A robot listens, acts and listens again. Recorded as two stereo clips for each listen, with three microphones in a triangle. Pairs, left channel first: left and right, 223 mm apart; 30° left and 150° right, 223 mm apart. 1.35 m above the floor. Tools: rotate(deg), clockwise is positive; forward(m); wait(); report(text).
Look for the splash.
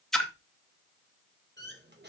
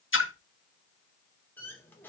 report("Found it: a splash, straight ahead.")